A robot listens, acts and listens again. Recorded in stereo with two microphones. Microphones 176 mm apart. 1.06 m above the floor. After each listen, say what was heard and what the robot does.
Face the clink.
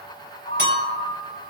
Turn 90° right.
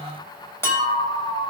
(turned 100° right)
So it is at 15° left. Turn 15° left.
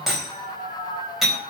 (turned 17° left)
Found it: a clink, straight ahead, over 4 m away.